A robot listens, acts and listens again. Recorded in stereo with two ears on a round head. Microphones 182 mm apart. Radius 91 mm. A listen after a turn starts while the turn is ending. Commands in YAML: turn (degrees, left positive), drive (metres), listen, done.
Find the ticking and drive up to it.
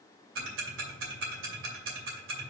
turn: -65
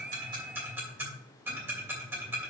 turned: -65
turn: -10
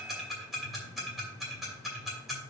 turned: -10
drive: 1.0
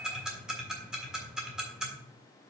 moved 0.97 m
drive: 1.0
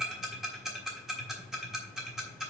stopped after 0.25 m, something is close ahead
done: "I am next to the ticking."